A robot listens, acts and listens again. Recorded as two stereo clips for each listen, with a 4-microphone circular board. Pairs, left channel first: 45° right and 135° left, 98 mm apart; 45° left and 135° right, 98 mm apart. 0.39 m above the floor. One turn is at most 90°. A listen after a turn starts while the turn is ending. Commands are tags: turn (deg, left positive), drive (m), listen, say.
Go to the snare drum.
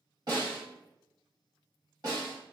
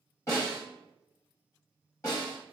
<turn deg="90"/>
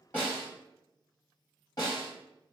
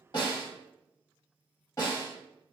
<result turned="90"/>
<drive m="1.0"/>
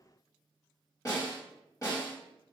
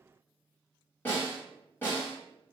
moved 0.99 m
<turn deg="-10"/>
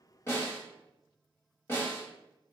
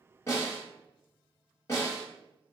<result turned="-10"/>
<drive m="1.0"/>
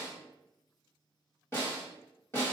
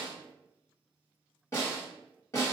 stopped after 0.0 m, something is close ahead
<say>I am next to the snare drum.</say>